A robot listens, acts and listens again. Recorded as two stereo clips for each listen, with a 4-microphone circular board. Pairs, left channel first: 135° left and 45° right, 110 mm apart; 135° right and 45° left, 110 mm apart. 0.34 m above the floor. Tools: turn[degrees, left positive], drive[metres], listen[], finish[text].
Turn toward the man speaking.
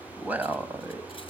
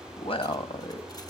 Thought: The man speaking: 110° right.
Action: turn[-110]
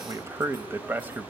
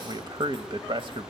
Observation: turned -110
Thought: The man speaking is now 25° left.
Action: turn[25]
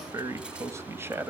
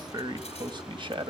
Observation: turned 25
Thought: The man speaking is now 20° left.
Action: turn[20]
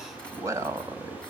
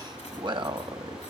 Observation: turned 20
Thought: The man speaking is now 15° left.
Action: turn[15]
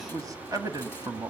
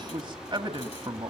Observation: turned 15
Thought: The man speaking is now 10° left.
Action: turn[10]
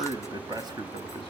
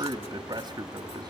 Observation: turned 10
Action: finish[Facing the man speaking, 1 to 2 m away.]